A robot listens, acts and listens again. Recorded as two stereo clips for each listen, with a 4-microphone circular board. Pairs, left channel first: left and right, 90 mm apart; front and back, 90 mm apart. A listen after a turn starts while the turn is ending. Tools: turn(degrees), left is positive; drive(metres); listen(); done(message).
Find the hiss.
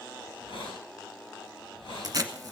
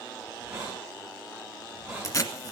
turn(degrees=100)
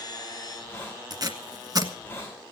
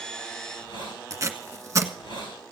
turn(degrees=15)
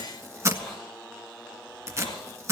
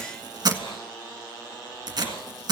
done("Found it: a hiss, straight ahead, over 4 m away.")